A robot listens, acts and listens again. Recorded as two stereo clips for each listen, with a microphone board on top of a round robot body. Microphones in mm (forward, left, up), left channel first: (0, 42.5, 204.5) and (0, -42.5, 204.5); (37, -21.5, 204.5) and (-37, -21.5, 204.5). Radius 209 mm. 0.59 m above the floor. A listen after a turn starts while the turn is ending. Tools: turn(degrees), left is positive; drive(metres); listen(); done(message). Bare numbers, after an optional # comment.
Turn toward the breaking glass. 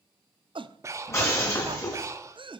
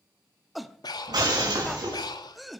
# The breaking glass: 150° left.
turn(150)
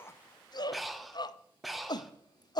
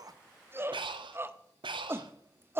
done("Facing where the breaking glass came from. I can't hear it now.")